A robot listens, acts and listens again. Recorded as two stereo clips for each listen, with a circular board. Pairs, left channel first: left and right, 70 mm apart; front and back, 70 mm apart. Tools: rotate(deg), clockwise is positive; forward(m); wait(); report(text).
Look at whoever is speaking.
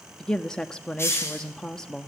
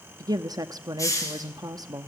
rotate(-170)
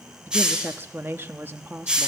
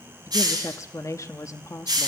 rotate(30)
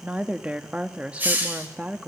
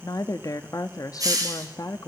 rotate(20)
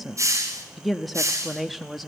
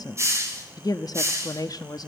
report("Facing the woman speaking.")